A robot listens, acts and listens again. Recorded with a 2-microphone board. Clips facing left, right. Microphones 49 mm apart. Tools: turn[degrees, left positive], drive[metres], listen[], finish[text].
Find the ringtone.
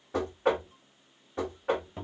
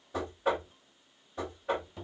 Action: listen[]
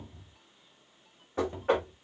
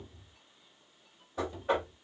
Action: listen[]
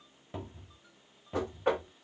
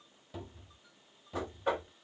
Action: finish[I can't make out a ringtone to turn to.]